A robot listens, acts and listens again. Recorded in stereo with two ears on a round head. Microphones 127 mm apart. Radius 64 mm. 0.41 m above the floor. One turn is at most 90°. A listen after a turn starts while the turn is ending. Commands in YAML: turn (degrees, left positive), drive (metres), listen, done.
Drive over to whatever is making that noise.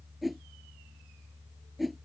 turn: 30
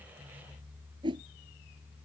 turn: -35
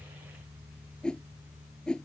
drive: 1.0
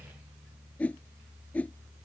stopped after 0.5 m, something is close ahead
turn: 10
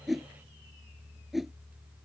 done: "Something is in my way. I am facing the whoosh but have not reached it."